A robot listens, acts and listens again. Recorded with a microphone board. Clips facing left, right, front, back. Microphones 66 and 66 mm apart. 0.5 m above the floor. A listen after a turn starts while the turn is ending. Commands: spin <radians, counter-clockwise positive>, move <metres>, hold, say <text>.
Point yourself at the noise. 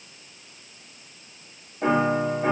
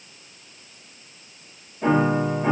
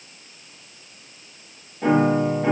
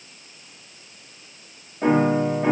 spin 2.27
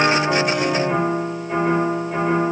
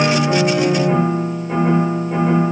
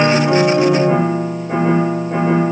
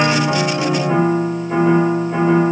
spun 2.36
say Found it: a piano, straight ahead, 1 to 2 m away.